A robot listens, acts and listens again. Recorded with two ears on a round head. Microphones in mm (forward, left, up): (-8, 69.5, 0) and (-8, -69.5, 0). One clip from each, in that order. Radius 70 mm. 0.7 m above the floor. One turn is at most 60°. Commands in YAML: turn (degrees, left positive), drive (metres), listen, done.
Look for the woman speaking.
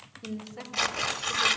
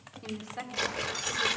turn: -60
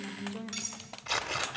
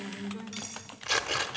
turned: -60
turn: -35
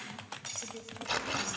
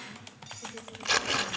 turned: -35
listen: true
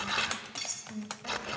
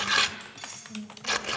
done: "Found it: a woman speaking, straight ahead."